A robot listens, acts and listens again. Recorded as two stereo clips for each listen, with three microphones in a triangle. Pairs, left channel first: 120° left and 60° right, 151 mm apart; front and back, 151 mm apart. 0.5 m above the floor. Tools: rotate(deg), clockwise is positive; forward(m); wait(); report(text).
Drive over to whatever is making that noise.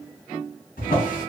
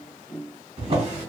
rotate(-140)
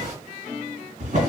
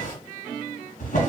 rotate(25)
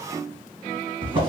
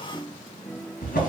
forward(1.0)
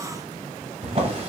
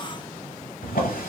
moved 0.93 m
rotate(10)
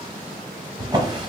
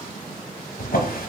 forward(1.0)
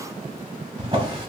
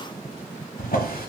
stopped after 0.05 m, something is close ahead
report("Arrived at the drawer, straight ahead.")